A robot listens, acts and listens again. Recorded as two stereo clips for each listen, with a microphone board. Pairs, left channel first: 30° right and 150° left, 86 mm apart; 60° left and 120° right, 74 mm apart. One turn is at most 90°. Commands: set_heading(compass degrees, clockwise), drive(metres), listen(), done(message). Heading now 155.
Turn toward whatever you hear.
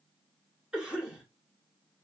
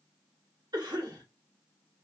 set_heading(245)
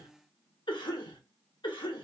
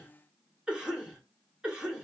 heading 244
set_heading(289)
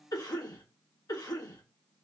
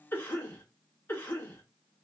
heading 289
done("Facing the cough.")